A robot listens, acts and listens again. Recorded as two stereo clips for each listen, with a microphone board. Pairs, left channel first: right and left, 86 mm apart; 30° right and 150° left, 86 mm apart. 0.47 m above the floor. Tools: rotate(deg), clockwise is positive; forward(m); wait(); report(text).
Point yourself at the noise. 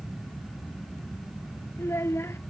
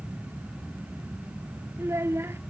rotate(150)
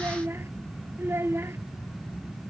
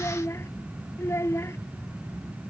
rotate(-30)
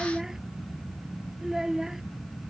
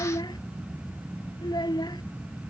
report("Facing the child speaking.")